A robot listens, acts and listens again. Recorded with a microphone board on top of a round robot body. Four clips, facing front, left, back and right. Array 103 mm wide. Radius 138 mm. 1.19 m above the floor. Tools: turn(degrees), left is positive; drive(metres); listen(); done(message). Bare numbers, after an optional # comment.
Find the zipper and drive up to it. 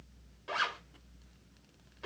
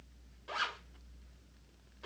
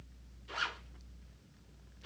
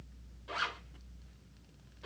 # The zipper: 15° left.
turn(15)
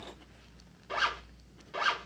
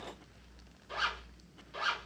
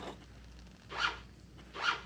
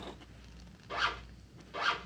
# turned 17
drive(1.0)
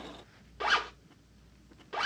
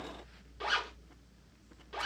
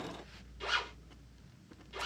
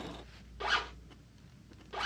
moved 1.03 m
drive(1.0)
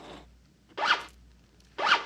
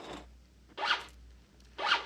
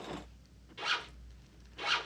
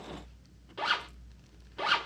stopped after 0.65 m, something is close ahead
done("Arrived at the zipper, straight ahead.")